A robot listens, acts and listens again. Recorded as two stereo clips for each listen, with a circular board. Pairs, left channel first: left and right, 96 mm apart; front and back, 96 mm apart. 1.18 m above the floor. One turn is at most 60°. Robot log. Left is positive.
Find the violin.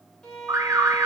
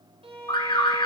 note: The violin: 175° left.
cmd yaw +60
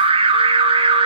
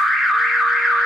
note: Nothing new. It was at 115° left.
cmd yaw +60
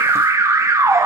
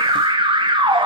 note: Nothing new. It was at 55° left.
cmd yaw +55
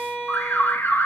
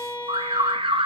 end: Found it: a violin, straight ahead.